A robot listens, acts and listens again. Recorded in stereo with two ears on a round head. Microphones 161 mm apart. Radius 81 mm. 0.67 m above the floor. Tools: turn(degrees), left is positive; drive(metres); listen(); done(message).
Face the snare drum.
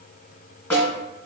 turn(degrees=30)
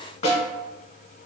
turn(degrees=140)
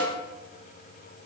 turn(degrees=-10)
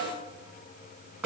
done("Facing the snare drum.")